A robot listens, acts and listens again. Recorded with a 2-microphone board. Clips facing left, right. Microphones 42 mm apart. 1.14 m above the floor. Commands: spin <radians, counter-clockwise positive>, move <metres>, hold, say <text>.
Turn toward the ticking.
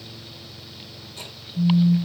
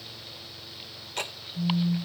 spin -1.13
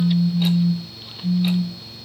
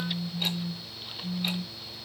hold
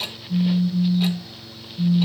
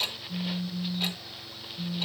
say Found it: ticking, straight ahead, 1 to 2 m away.